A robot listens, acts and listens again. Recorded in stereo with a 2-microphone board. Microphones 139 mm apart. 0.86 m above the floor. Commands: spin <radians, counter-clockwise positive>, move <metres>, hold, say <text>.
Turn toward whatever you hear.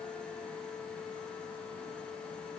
hold
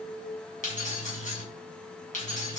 spin 1.13
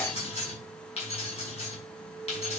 spin 0.87
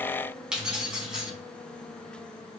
say Found it: keys jangling, straight ahead.